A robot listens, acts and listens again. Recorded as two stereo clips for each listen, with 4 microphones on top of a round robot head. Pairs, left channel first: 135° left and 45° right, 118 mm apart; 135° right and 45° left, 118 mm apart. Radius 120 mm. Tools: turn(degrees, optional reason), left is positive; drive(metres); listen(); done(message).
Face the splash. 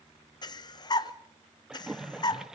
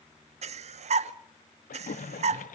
turn(degrees=-130, reason="The splash: 130° right.")
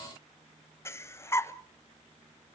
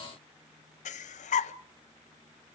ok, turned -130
done("Facing where the splash came from. I can't hear it now.")